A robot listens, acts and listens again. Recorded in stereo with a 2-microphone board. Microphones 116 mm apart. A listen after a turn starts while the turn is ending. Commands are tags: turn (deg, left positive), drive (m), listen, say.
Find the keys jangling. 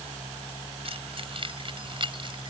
<turn deg="-45"/>
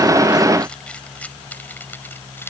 <turn deg="20"/>
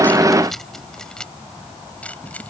<turn deg="15"/>
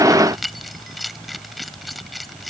<say>Facing the keys jangling.</say>